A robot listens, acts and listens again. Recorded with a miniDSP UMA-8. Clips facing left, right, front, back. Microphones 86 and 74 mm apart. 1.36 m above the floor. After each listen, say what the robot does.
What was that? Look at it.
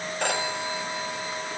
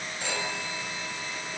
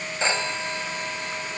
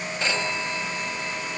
Turn 65° left.
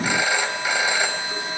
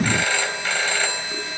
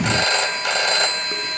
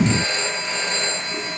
Turn 10° left.
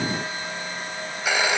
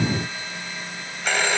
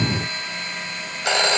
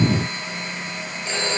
Facing the phone ringing, over 4 m away.